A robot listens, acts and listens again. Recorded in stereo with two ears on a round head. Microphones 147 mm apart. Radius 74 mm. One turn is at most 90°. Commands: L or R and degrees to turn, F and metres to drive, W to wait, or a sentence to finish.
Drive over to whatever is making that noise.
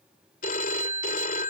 L50
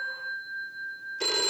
F1.0
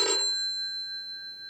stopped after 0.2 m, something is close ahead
Something is in my way. I am facing the phone ringing but have not reached it.